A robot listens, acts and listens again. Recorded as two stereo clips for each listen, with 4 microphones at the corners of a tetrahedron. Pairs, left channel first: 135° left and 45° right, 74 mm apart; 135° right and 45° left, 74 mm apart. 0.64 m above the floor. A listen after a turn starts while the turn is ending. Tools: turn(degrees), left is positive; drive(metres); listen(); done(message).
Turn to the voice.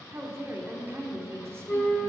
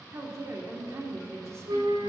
done("Found it: a woman speaking, straight ahead, 1 to 2 m away.")